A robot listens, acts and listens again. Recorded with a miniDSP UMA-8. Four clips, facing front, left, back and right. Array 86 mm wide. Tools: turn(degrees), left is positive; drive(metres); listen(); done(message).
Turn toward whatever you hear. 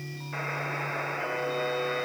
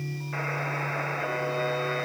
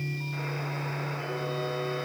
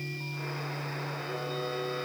turn(degrees=60)
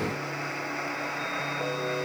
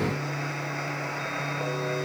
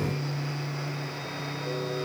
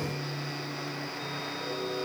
turn(degrees=45)
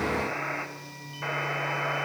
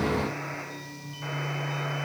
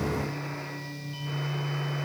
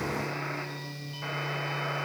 listen()
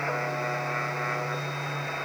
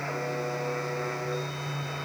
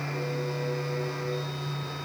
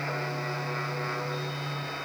done("Facing the buzzer.")